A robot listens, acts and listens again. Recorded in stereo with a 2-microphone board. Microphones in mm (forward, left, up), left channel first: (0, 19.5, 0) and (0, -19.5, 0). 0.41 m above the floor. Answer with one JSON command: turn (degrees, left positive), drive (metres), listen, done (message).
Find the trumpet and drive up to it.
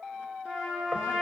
{"turn": -15}
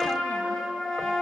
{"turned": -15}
{"drive": 1.0}
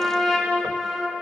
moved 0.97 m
{"drive": 1.0}
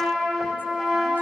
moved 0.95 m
{"drive": 1.0}
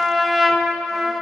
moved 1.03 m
{"drive": 1.0}
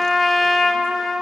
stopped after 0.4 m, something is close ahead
{"done": "Arrived at the trumpet, straight ahead."}